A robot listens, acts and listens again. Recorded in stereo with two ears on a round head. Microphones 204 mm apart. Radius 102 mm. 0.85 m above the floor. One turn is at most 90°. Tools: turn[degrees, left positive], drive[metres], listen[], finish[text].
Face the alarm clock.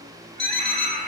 Action: turn[30]
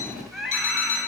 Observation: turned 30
Thought: So it is at 145° left.
Action: turn[90]
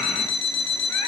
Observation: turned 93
Thought: The alarm clock is now 55° left.
Action: turn[55]
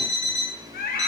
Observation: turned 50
Action: finish[Found it: an alarm clock, straight ahead, over 4 m away.]